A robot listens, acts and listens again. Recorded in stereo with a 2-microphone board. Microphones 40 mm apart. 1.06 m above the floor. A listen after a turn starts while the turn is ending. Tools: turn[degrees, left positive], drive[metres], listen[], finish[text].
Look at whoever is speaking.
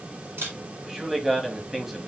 Action: turn[-30]
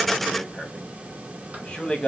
Thought: So it is at 25° left.
Action: turn[25]
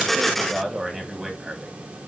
Thought: The man speaking is now 10° right.
Action: turn[-10]
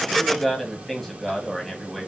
Action: finish[Found it: a man speaking, straight ahead, 1 to 2 m away.]